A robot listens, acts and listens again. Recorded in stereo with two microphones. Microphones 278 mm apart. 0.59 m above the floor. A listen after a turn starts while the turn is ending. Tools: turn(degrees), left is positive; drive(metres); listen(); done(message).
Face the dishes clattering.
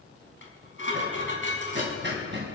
turn(degrees=45)
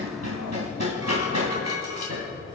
turn(degrees=90)
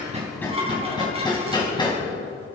turn(degrees=-20)
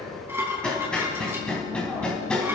turn(degrees=-10)
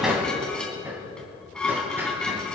done("Found it: dishes clattering, straight ahead.")